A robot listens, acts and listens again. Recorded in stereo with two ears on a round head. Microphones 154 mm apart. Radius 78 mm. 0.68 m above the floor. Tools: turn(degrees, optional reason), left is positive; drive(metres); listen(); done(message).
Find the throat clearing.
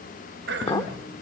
turn(degrees=-70, reason="The throat clearing: about 70° right or 110° right.")
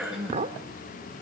done("Found it: throat clearing, straight ahead.")